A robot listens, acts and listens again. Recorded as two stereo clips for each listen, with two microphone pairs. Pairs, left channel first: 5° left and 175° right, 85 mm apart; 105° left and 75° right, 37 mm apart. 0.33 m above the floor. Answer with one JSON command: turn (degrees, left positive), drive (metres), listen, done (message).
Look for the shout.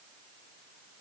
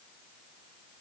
{"listen": true}
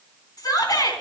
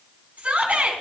{"turn": -30}
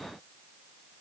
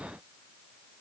{"listen": true}
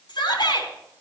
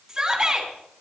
{"done": "Facing the shout, 2 to 4 m away."}